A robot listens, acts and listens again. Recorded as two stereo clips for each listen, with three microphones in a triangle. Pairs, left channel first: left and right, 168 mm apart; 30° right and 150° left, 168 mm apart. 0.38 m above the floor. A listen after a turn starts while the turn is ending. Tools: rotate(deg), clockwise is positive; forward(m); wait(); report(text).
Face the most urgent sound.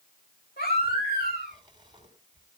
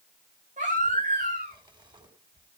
rotate(-110)
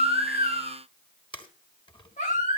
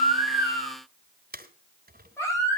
rotate(-45)
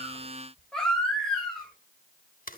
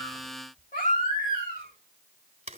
report("Facing the baby crying, over 4 m away.")